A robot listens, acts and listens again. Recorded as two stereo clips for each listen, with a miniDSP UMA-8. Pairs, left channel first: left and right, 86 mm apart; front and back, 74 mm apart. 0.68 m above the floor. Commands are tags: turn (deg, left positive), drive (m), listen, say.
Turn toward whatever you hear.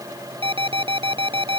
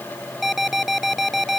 <turn deg="-95"/>
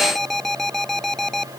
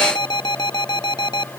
<say>Found it: an alarm, straight ahead.</say>